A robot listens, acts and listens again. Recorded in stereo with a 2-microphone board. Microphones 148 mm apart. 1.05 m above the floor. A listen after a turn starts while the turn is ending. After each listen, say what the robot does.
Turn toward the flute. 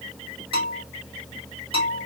Keep listening.
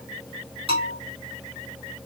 Keep listening.
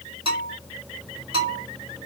I can't make out a flute to turn to.